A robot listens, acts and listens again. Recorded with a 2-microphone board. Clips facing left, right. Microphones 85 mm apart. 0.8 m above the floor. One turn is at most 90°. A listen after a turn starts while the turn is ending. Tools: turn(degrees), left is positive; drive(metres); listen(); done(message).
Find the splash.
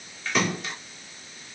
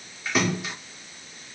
turn(degrees=-30)
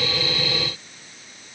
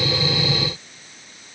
listen()
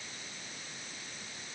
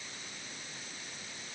done("I heard a splash, but can't make it out now. It was about 25° left or 145° right.")